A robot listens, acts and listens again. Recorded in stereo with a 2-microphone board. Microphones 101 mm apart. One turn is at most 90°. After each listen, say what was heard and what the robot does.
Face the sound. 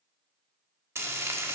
The frying: about 25° right or 155° right. Turn 25° right.
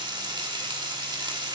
So it is at 125° right. Turn 90° right.
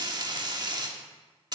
The frying is now 55° right. Turn 55° right.
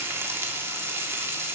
The frying is now 30° right. Turn 30° right.
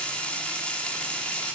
The frying is now 15° left. Turn 15° left.
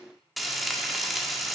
Facing the frying.